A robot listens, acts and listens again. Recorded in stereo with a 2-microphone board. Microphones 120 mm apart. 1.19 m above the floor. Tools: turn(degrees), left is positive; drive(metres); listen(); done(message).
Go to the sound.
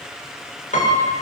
turn(degrees=90)
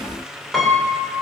drive(metres=1.0)
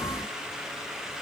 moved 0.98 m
listen()
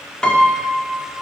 drive(metres=1.0)
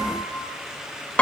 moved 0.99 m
turn(degrees=10)
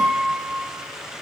drive(metres=1.0)
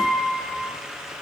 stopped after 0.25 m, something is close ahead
done("Arrived at the piano, straight ahead.")